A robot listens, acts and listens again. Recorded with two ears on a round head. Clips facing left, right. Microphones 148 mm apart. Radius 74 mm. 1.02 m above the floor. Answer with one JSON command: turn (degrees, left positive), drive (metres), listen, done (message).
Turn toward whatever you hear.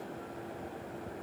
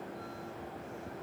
{"listen": true}
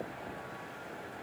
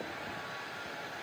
{"listen": true}
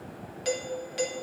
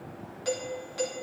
{"turn": 25}
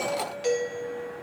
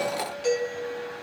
{"done": "Facing the doorbell, 1 to 2 m away."}